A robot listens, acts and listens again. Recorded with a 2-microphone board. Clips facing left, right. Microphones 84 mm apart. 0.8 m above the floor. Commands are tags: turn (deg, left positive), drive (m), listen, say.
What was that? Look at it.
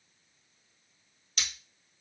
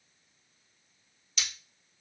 <turn deg="45"/>
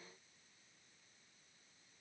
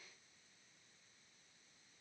<listen/>
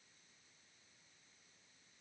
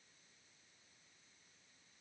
<say>I heard breaking glass, but can't make it out now. It was about straight ahead or 90° left.</say>